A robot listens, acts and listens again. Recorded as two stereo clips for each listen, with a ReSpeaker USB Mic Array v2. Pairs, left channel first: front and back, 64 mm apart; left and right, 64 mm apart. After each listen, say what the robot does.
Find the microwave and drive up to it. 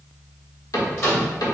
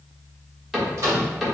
Turn 45° right.
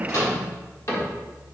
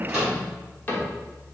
Turn 10° right.
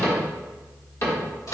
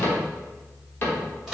Drive 1.0 m forward.
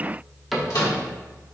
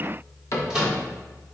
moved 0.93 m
Turn 10° right.
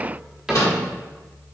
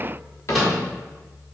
Drive 1.0 m forward.
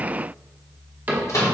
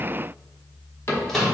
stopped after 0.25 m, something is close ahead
Turn 10° left.
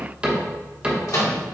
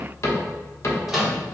I am next to the microwave.